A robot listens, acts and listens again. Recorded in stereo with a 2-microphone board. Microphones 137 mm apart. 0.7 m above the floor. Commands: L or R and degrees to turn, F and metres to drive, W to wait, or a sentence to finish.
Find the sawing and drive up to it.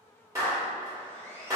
L15
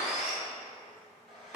F1.0
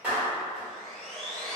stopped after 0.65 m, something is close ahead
Arrived at the sawing, straight ahead.